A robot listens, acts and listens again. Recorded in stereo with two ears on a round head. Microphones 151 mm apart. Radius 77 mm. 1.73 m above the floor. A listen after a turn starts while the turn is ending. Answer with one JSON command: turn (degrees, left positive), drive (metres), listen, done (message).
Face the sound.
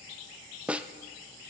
{"turn": -30}
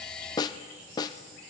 {"turn": 25}
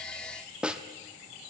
{"done": "Facing the snare drum."}